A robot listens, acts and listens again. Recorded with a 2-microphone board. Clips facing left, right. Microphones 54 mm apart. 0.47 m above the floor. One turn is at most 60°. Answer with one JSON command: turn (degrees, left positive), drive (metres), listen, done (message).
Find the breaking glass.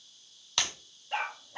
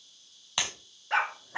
{"turn": -30}
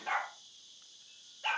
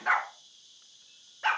{"listen": true}
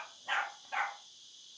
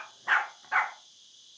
{"done": "I heard breaking glass, but can't make it out now. It was about 15° left or 135° right."}